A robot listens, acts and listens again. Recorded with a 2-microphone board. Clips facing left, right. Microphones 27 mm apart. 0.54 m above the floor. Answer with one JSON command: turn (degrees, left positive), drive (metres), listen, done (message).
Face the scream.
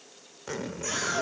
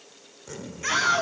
{"turn": -40}
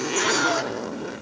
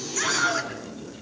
{"done": "Facing the scream, over 4 m away."}